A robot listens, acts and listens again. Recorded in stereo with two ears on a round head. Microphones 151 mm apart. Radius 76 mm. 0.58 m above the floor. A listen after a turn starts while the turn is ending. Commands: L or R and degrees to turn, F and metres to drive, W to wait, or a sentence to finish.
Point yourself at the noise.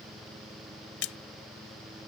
L90
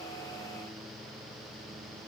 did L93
I heard a splash from this way, but can't make it out now.